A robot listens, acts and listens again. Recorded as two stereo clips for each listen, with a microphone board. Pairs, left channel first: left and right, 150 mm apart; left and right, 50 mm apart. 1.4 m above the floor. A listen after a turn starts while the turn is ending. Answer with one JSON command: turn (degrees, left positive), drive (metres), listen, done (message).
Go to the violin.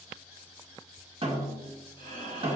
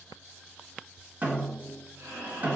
{"listen": true}
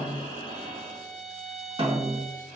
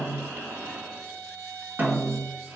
{"turn": -55}
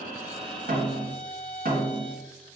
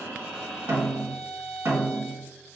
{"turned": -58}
{"drive": 1.0}
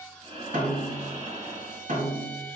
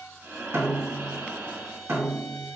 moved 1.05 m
{"turn": 10}
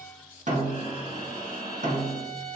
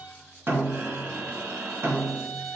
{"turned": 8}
{"drive": 1.0}
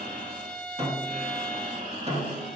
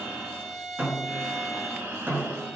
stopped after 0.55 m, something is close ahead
{"done": "I am next to the violin."}